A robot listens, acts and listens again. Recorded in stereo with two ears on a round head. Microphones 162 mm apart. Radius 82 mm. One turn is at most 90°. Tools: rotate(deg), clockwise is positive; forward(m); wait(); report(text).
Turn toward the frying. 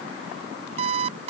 wait()
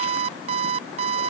wait()
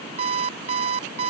report("I can't make out frying to turn to.")